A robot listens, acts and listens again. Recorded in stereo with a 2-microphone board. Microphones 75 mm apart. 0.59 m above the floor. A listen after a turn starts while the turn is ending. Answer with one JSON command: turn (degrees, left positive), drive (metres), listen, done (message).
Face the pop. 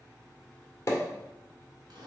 {"turn": 40}
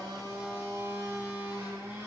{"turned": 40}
{"listen": true}
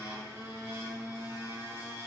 {"done": "I heard a pop, but can't make it out now. It was about straight ahead or 100° left."}